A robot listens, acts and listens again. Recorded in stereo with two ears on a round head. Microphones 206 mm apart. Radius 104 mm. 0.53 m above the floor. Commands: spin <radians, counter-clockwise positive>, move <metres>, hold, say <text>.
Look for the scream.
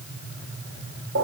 hold
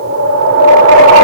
hold
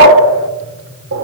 say I can't make out a scream to turn to.